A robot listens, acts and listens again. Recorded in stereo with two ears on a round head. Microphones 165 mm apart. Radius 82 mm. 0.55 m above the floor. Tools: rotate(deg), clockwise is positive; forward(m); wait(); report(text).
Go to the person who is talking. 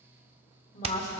rotate(-40)
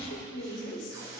rotate(-95)
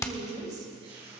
rotate(25)
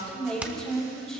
forward(1.0)
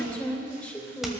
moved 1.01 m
rotate(-10)
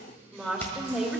forward(1.0)
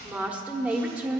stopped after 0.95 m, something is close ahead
rotate(10)
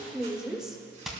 report("I am next to the woman speaking.")